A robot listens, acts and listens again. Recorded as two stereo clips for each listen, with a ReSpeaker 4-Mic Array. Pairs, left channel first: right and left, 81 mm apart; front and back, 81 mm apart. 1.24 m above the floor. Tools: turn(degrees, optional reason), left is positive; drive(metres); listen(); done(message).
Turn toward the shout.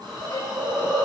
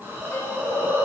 listen()
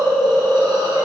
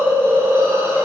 listen()
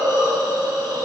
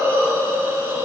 done("I can't make out a shout to turn to.")